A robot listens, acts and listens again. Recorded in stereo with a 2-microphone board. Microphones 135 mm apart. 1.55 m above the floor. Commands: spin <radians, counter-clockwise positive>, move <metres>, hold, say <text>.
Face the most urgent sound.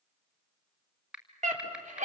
spin -1.13
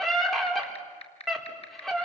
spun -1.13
say Facing the scream, over 4 m away.